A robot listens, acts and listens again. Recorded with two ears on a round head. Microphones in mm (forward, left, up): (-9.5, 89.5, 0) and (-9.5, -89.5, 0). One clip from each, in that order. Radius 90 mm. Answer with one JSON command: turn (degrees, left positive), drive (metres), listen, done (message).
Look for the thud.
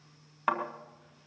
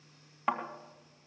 {"turn": 15}
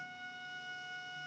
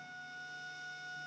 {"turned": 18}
{"listen": true}
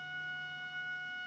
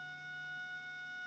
{"done": "I heard a thud, but can't make it out now. It was about straight ahead or 145° left."}